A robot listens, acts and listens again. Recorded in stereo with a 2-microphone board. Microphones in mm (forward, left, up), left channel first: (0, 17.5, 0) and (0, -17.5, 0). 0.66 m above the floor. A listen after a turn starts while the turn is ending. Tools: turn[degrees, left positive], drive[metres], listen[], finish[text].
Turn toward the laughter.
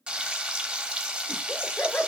Thought: The laughter: about 60° left or 120° left.
Action: turn[60]
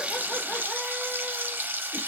Action: listen[]
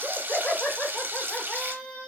Thought: So it is at 45° left.
Action: turn[45]
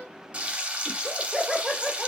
Action: finish[Facing the laughter, 1 to 2 m away.]